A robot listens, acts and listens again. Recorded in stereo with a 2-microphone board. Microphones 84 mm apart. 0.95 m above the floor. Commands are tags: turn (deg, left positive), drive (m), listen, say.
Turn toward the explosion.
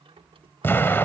<turn deg="25"/>
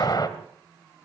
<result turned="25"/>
<turn deg="125"/>
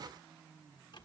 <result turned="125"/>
<say>I heard an explosion from this way, but can't make it out now.</say>